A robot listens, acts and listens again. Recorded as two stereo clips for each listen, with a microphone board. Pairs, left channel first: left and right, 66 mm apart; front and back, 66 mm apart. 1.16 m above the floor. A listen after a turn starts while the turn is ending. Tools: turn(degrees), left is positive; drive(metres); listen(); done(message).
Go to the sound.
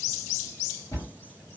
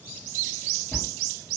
turn(degrees=65)
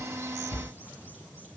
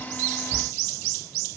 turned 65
turn(degrees=20)
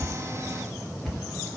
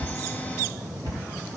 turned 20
drive(metres=1.0)
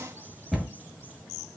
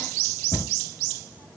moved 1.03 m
turn(degrees=-10)
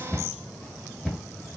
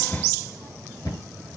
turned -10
drive(metres=1.0)
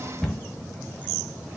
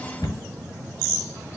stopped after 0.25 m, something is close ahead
done("I am next to the cupboard door.")